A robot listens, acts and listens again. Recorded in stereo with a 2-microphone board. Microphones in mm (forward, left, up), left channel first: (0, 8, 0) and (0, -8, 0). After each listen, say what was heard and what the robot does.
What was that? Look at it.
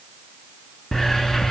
The hiss: about 30° left or 150° left. Turn 30° left.
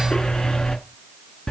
So it is at 120° left. Turn 120° left.
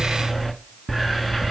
The hiss is now 10° right. Turn 10° right.
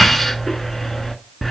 Found it: a hiss, straight ahead.